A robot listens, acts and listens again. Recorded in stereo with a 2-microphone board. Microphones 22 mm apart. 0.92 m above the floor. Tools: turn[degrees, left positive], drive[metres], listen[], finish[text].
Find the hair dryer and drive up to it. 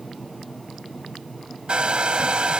Thought: The hair dryer: about 60° right or 120° right.
Action: turn[-60]
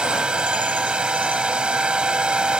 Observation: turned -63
Thought: So it is at 60° right.
Action: turn[-60]
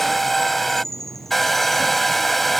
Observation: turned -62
Action: drive[1.0]
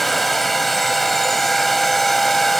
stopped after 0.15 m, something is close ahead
Action: finish[Something is in my way. I am facing the hair dryer but have not reached it.]